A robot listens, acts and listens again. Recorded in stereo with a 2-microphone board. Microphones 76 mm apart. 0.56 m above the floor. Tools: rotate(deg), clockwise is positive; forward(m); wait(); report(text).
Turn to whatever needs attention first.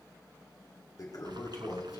wait()
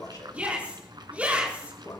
rotate(15)
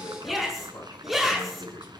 report("Found it: a shout, straight ahead.")